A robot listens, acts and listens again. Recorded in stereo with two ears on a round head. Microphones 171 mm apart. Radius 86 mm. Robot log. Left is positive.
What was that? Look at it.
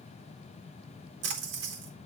note: The splash: about 60° right or 120° right.
cmd yaw -60
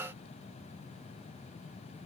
cmd idle
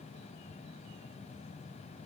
end: I heard a splash, but can't make it out now. It was about straight ahead or 60° right.